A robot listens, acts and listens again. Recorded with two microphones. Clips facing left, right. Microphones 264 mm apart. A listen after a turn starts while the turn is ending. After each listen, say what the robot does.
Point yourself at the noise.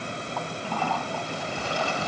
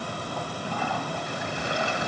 Turn 20° right.
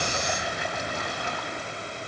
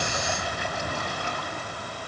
Keep listening.
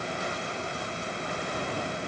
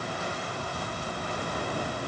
Keep listening.
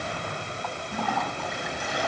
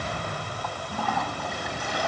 Found it: a toilet flushing, straight ahead, 2 to 4 m away.